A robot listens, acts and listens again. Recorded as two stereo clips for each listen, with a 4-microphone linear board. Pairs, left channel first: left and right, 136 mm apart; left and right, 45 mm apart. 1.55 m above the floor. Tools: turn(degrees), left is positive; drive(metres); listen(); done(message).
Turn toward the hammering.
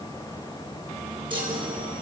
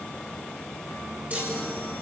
listen()
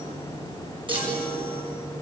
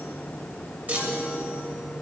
listen()
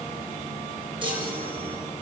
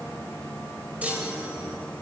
done("I can't make out hammering, only a chime.")